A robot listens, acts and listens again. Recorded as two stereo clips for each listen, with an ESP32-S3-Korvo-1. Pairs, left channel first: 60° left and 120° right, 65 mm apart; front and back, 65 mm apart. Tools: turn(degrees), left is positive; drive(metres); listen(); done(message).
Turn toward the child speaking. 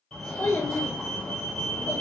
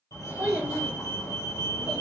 turn(degrees=110)
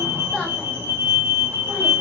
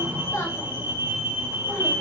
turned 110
listen()
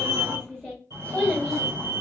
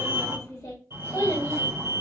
turn(degrees=-15)
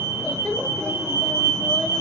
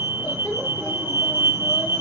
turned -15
turn(degrees=-10)
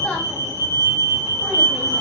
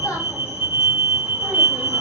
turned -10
listen()
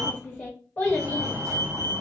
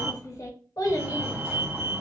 done("Facing the child speaking.")